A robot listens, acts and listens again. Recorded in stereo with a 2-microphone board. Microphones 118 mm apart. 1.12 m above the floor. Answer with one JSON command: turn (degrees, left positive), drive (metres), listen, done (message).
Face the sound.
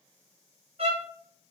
{"turn": -60}
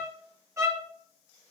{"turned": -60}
{"turn": -30}
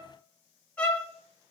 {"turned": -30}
{"turn": 15}
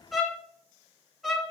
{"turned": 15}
{"done": "Facing the violin, under 1 m away."}